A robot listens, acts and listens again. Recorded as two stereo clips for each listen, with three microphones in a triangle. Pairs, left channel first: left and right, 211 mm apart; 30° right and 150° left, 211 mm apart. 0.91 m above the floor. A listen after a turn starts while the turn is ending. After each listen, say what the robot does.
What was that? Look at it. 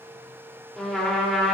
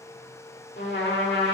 Found it: a trumpet, straight ahead, 1 to 2 m away.